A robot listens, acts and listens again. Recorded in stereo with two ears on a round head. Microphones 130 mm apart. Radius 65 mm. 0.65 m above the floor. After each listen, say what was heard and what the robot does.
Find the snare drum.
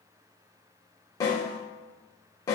The snare drum: about 25° left or 155° left. Turn 25° left.
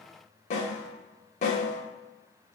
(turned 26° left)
So it is at 125° left. Turn 125° left.
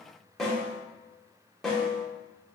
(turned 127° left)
Facing the snare drum, under 1 m away.